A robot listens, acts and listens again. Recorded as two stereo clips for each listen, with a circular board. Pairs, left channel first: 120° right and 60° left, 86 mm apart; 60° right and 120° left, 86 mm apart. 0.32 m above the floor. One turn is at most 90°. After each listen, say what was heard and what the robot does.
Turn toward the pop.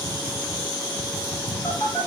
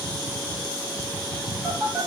Keep listening.
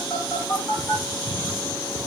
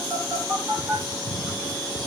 Keep listening.
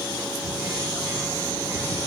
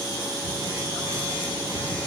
I can't make out a pop, only a phone buzzing.